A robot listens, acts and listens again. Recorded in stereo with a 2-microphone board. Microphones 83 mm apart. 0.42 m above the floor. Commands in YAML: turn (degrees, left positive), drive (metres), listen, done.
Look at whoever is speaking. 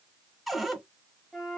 listen: true
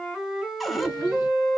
turn: -45
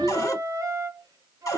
turn: -85
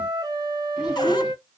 listen: true
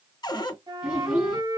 turn: -10
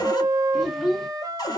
done: "Facing the child speaking, 1 to 2 m away."